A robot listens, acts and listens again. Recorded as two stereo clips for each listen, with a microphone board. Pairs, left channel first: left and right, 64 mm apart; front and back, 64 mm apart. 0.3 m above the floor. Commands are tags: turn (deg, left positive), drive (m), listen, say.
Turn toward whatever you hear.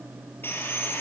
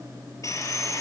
<turn deg="30"/>
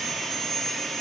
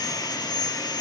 <say>Found it: sawing, straight ahead, over 4 m away.</say>